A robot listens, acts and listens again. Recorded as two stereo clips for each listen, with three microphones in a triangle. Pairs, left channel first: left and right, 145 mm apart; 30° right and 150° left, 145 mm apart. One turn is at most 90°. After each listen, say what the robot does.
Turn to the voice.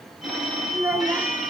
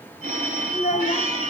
Turn 10° right.
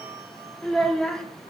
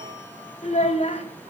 Found it: a child speaking, straight ahead, 1 to 2 m away.